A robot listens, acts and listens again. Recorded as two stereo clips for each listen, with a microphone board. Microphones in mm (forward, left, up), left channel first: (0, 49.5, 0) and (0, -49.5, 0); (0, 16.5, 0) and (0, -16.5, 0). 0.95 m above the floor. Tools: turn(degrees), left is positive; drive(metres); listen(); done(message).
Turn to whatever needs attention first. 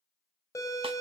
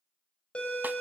turn(degrees=35)
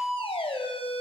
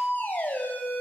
turn(degrees=115)
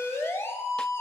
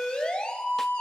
turn(degrees=25)
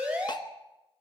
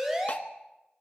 turn(degrees=-15)
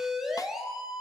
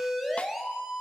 done("Facing the siren.")